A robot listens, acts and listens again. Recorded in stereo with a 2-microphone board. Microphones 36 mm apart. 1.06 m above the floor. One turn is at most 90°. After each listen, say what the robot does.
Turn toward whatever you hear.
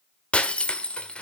Turn 35° left.
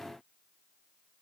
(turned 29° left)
Keep listening.
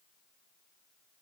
I heard breaking glass, but can't make it out now. It was about 5° left or 120° left.